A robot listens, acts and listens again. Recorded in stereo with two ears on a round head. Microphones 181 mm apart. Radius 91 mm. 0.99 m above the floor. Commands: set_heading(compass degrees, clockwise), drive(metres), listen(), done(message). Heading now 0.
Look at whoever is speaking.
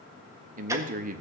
set_heading(45)
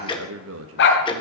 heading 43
set_heading(133)
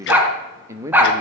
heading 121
set_heading(136)
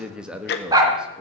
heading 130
done("Facing the man speaking.")